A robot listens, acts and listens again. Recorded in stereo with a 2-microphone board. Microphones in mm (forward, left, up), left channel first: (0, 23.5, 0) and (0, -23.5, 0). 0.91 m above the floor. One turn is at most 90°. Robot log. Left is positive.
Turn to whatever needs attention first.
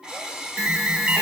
note: The alarm: about 30° right or 150° right.
cmd yaw -30
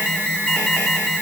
end: Found it: an alarm, straight ahead.